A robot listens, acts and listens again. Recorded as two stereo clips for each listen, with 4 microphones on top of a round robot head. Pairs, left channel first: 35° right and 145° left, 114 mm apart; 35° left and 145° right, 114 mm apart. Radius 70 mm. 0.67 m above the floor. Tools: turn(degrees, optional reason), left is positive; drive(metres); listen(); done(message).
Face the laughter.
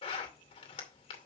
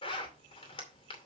listen()
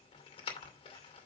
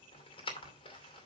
listen()
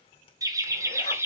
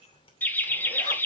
turn(degrees=95, reason="The laughter: 95° left.")
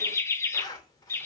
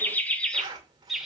turn(degrees=-65, reason="The laughter is now 65° right.")
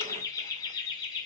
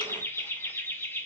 turn(degrees=-25, reason="The laughter is now 25° right.")
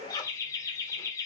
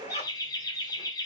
done("Found it: laughter, straight ahead, 1 to 2 m away.")